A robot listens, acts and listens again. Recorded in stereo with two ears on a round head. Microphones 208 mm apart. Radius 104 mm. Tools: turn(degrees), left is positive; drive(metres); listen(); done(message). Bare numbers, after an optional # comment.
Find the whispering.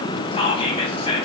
# The whispering: about 25° left or 155° left.
turn(25)
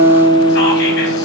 listen()
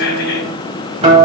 listen()
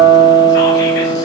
done("I heard whispering, but can't make it out now. It was about straight ahead or 130° left.")